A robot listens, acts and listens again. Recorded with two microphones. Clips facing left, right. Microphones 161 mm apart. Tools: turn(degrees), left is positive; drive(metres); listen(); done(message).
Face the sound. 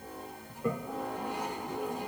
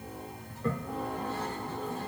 turn(degrees=15)
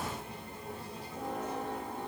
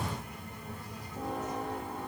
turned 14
listen()
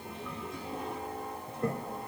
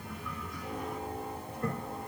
turn(degrees=150)
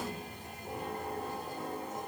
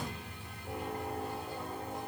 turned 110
turn(degrees=40)
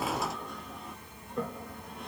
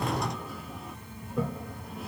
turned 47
done("Facing the toilet flushing.")